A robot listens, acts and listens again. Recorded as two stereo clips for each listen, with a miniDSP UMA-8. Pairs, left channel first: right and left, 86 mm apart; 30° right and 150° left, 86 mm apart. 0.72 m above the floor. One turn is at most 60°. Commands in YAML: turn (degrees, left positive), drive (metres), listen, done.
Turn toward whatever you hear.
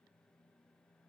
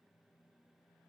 listen: true
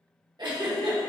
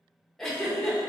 turn: 55
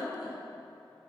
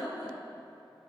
turn: 10
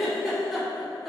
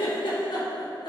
done: "Found it: a giggle, straight ahead, under 1 m away."